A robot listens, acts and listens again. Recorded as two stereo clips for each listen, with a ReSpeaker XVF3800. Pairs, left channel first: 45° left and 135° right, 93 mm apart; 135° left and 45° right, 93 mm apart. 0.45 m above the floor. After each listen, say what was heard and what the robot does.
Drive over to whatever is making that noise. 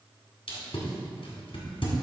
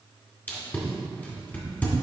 The tape being pulled: 65° left. Turn 65° left.
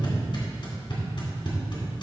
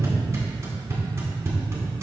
The tape being pulled is now 15° left. Turn 15° left.
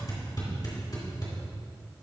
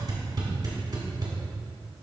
Drive 1.0 m forward.
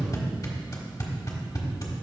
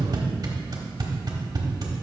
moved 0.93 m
Drive 1.0 m forward.
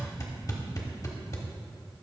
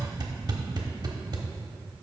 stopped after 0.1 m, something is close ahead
I am next to the tape being pulled.